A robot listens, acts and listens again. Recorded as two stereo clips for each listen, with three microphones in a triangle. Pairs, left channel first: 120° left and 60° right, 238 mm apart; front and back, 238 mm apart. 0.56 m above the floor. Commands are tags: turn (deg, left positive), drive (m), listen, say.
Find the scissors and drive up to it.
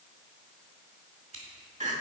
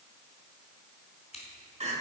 <turn deg="-60"/>
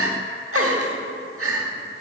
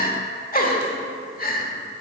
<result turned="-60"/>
<listen/>
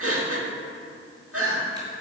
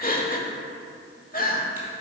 <listen/>
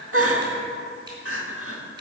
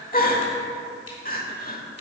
<say>Facing where the scissors came from. I can't hear it now. I did not reach it.</say>